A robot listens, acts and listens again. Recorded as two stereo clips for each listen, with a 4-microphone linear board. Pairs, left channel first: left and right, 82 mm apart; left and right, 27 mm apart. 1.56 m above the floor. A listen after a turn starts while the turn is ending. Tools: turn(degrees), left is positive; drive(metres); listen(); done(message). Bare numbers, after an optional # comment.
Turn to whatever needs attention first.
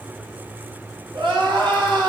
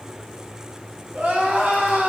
# The crying: about 70° right or 110° right.
turn(-70)
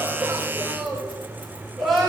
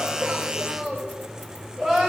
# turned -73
done("Facing the crying.")